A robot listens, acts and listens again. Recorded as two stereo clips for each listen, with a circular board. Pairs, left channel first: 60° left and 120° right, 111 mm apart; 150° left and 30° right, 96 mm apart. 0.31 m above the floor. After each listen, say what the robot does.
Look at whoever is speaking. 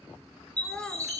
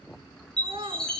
Turn 20° right.
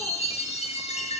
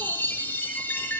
Keep listening.
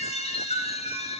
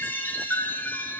Keep listening.
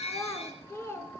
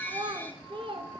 Facing the child speaking.